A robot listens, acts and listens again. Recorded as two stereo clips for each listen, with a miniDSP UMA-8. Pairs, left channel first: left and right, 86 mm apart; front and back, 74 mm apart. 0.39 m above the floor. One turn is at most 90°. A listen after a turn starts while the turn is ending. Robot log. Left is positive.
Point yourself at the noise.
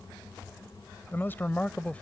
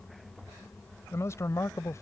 note: The man speaking: 25° left.
cmd yaw +25
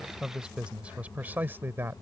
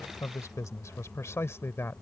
note: The man speaking is now 40° right.
cmd yaw -40
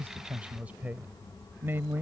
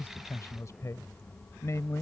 note: The man speaking is now 35° right.
cmd yaw -35
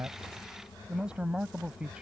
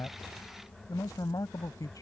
note: The man speaking is now 15° right.
cmd yaw -15
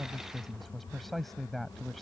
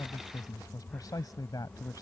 end: Found it: a man speaking, straight ahead.